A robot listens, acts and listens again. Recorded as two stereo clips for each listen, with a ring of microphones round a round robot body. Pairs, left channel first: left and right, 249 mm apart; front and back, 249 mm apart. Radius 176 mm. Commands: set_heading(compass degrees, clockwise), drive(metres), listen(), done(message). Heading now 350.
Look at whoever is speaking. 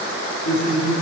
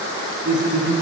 set_heading(215)
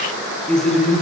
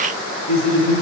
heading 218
done("Facing the man speaking.")